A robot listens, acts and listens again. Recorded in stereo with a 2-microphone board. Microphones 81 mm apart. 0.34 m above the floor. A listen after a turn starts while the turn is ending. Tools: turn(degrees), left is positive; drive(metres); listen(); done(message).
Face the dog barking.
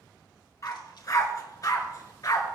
turn(degrees=50)
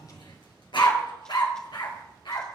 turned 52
turn(degrees=70)
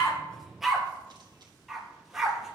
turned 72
done("Found it: a dog barking, straight ahead.")